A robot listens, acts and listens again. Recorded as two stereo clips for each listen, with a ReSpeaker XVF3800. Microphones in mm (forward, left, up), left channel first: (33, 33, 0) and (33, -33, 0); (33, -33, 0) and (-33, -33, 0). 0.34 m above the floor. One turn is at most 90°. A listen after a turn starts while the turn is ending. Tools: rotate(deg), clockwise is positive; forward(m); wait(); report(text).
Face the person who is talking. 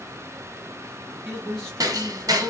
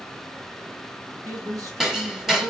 rotate(-90)
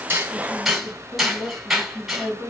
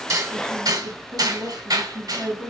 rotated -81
rotate(-90)
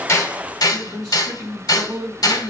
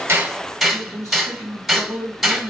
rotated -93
report("Found it: a man speaking, straight ahead.")